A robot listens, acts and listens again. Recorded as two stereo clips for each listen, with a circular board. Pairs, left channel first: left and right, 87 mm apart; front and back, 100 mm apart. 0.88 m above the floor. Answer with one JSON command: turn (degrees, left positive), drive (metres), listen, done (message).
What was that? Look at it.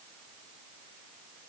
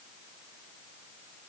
{"listen": true}
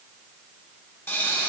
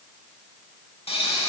{"turn": 25}
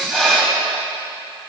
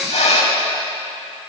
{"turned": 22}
{"done": "Found it: a pop, straight ahead, 1 to 2 m away."}